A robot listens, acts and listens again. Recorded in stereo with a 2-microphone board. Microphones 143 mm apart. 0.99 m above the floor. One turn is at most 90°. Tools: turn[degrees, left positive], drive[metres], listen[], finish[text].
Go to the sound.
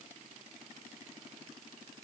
Action: listen[]
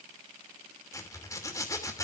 Thought: The zipper: about 25° left or 155° left.
Action: turn[25]
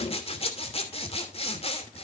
Thought: So it is at 135° left.
Action: turn[90]
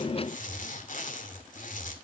Thought: The zipper is now 70° left.
Action: turn[70]
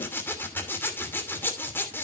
Thought: The zipper is now 15° left.
Action: turn[15]
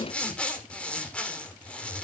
Thought: The zipper is now 10° left.
Action: turn[10]
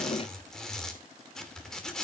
Action: drive[1.0]
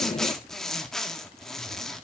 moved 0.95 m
Action: drive[1.0]
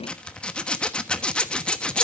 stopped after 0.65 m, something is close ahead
Action: finish[I am next to the zipper.]